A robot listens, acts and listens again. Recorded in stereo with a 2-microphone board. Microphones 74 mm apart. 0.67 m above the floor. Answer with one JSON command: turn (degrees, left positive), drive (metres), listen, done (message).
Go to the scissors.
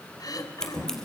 {"turn": 30}
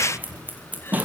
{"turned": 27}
{"turn": -20}
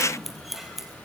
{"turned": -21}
{"drive": 1.0}
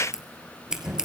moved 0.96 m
{"drive": 1.0}
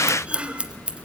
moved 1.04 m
{"turn": -15}
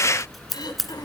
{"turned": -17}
{"drive": 1.0}
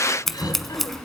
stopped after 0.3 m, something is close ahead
{"done": "Arrived at the scissors, straight ahead."}